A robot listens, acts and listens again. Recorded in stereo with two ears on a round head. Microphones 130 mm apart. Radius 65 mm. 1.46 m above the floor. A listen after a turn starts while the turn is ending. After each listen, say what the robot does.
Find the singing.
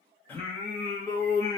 Turn 25° left.
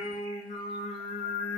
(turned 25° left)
Turn 110° left.
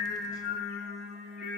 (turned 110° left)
Facing the singing, 1 to 2 m away.